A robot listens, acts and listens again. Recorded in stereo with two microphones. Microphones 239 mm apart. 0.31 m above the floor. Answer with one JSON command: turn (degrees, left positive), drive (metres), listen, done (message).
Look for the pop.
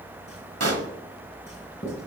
{"turn": -90}
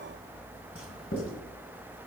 {"done": "Facing where the pop came from. I can't hear it now."}